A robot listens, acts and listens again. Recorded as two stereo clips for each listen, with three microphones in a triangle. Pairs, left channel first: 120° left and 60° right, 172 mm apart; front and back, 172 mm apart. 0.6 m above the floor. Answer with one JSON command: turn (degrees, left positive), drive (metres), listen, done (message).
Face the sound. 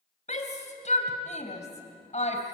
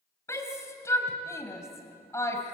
{"turn": 75}
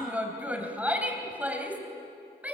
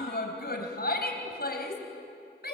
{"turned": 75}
{"turn": 20}
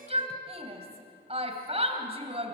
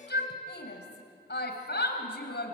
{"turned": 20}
{"done": "Found it: a shout, straight ahead, 2 to 4 m away."}